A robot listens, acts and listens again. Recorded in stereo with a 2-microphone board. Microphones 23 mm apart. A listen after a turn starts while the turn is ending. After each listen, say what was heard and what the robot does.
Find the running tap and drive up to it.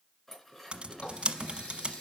The running tap: about 60° left or 120° left. Turn 60° left.
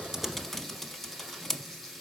Drive 1.0 m forward.
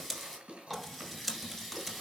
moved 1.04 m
Drive 1.0 m forward.
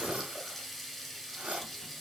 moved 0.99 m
Drive 1.0 m forward.
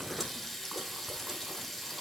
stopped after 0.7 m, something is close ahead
The running tap is now 10° left. Turn 10° left.
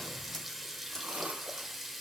Arrived at the running tap, straight ahead.